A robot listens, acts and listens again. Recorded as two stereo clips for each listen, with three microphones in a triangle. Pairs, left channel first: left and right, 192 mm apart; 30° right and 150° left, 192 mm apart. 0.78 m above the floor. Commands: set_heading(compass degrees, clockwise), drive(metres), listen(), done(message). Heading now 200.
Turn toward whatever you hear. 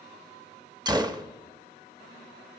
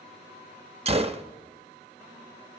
set_heading(355)
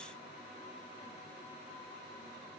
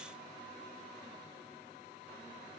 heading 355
done("Facing where the gunshot came from. I can't hear it now.")